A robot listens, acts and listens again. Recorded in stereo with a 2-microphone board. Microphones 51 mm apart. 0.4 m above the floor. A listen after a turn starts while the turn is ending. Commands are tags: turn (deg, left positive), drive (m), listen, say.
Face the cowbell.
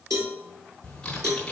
<turn deg="-90"/>
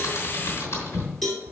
<say>Found it: a cowbell, straight ahead.</say>